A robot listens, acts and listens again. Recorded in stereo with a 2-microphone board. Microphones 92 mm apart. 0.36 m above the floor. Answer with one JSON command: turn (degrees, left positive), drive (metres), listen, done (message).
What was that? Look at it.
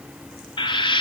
{"turn": 65}
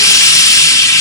{"turn": 40}
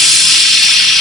{"done": "Found it: frying, straight ahead."}